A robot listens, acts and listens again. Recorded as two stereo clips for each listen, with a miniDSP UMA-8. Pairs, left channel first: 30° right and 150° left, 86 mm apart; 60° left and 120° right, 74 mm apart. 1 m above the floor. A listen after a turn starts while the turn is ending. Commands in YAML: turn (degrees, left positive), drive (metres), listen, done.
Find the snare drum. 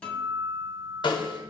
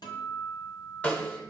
turn: -10
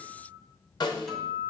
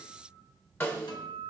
done: "Facing the snare drum."